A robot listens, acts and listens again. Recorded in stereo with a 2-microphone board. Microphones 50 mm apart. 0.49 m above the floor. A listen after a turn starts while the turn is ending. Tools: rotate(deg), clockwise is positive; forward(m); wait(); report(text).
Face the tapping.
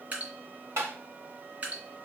rotate(65)
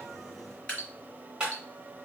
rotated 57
rotate(20)
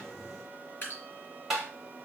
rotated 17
report("Facing the tapping.")